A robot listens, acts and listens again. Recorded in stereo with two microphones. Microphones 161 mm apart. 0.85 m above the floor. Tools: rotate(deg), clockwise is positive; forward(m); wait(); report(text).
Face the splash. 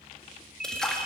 rotate(-30)
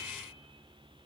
wait()
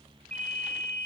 report("I heard a splash, but can't make it out now. It was about 25° right or 145° left.")